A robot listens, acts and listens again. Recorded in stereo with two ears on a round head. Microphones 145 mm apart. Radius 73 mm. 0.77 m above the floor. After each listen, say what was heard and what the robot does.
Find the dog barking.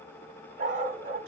The dog barking: about 50° right or 130° right. Turn 50° right.
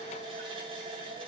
Keep listening.
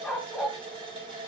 Found it: a dog barking, straight ahead.